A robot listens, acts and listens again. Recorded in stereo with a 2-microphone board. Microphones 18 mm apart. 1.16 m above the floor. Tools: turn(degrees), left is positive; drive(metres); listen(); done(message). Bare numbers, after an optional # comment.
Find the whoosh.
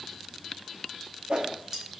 # The whoosh: about 55° right or 125° right.
turn(-55)
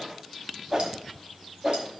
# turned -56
# So it is at 40° right.
turn(-40)
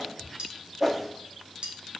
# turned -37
done("Found it: a whoosh, straight ahead.")